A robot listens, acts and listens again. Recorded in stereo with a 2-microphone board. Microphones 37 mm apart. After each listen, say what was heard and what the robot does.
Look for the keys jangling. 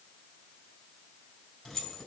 The keys jangling: about 20° left or 160° left. Turn 20° left.
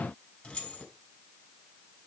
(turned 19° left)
So it is at 140° left. Turn 140° left.
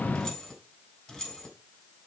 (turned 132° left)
Found it: keys jangling, straight ahead.